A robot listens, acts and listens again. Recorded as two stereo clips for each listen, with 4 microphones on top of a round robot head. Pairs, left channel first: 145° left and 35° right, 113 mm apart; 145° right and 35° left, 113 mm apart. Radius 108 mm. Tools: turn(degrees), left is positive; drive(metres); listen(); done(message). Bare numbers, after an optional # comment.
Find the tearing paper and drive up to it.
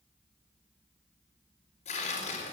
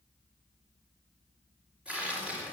# The tearing paper: 115° left.
turn(115)
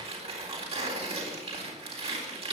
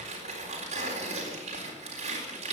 drive(1.0)
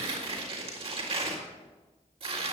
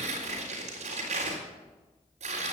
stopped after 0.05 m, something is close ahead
done("Something is in my way. I am facing the tearing paper but have not reached it.")